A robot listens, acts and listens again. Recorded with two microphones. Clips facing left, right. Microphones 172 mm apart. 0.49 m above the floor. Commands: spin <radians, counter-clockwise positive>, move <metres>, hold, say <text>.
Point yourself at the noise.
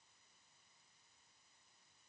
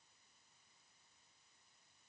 hold
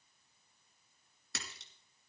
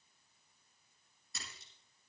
spin 1.57
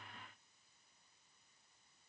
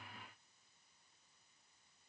say I heard a splash from this way, but can't make it out now.